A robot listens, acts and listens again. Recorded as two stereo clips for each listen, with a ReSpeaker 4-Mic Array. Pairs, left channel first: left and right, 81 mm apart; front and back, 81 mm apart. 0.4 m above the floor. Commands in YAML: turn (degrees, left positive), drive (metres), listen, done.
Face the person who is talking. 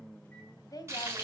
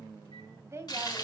turn: 125
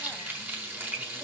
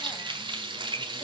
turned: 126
listen: true
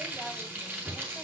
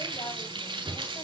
listen: true
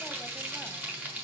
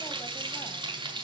done: "Facing where the woman speaking came from. I can't hear it now."